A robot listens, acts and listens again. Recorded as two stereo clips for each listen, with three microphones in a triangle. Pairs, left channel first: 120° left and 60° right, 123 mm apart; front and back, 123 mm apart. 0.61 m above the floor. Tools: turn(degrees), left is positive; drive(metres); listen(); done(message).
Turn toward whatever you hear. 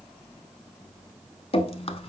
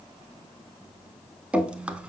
turn(degrees=100)
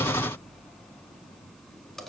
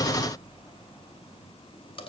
turn(degrees=35)
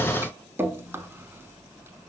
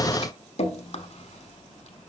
turn(degrees=10)
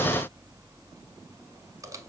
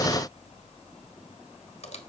done("Facing the dripping, under 1 m away.")